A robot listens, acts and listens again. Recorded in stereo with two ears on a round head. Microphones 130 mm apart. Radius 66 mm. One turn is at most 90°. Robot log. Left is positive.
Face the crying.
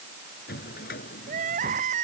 note: The crying: about 55° right or 125° right.
cmd yaw -55
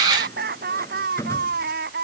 note: So it is at 65° right.
cmd yaw -65
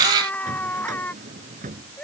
note: The crying is now 10° left.
cmd yaw +10
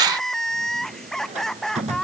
end: Facing the crying.